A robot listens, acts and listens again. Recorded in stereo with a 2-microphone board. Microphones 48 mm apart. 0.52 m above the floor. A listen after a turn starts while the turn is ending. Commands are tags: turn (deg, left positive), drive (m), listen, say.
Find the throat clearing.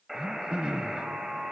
<turn deg="-15"/>
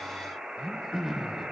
<say>Facing the throat clearing.</say>